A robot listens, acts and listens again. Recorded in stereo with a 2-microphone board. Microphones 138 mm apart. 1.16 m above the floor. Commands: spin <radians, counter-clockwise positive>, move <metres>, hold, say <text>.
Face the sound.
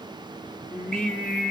spin 0.52
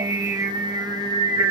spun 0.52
spin -0.44
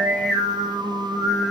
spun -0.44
say Facing the singing, 1 to 2 m away.